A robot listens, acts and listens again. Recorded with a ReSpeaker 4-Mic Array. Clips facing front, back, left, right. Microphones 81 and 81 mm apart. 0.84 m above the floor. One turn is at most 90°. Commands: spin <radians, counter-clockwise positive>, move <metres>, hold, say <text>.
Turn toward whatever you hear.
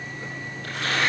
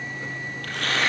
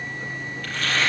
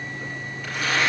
spin -1.57
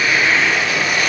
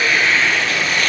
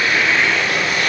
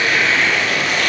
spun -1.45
spin -1.48
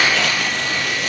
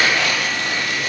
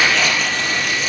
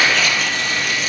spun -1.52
say Facing the tearing paper.